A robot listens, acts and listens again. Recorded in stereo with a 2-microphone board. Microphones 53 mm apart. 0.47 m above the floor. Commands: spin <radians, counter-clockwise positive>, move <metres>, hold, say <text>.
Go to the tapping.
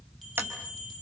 spin -0.79
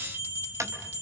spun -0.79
spin -1.48
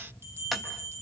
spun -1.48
move 1.0
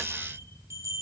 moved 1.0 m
hold
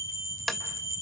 move 1.0
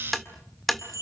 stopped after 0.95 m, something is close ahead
say Arrived at the tapping, straight ahead.